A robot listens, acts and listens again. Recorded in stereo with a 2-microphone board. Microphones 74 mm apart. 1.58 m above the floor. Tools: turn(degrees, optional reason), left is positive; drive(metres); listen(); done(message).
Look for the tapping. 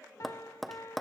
turn(degrees=30)
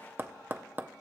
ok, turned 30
turn(degrees=-30, reason="So it is at 30° right.")
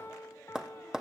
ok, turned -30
turn(degrees=-10, reason="The tapping is now 10° right.")
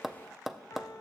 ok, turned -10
done("Found it: tapping, straight ahead, under 1 m away.")